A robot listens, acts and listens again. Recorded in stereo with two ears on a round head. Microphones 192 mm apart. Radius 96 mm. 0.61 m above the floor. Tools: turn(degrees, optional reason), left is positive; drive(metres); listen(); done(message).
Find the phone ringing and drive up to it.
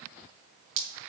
listen()
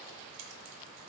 listen()
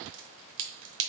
done("I can't make out a phone ringing, only dripping.")